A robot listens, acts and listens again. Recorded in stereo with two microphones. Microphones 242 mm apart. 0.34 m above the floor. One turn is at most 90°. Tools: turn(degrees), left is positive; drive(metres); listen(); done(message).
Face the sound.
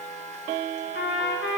turn(degrees=55)
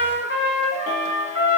turn(degrees=65)
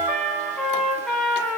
done("Found it: a trumpet, straight ahead.")